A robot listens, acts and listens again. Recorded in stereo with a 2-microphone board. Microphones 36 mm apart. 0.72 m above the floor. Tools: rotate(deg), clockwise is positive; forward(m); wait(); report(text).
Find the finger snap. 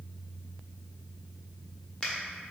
rotate(-20)
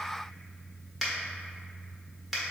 report("Facing the finger snap, 1 to 2 m away.")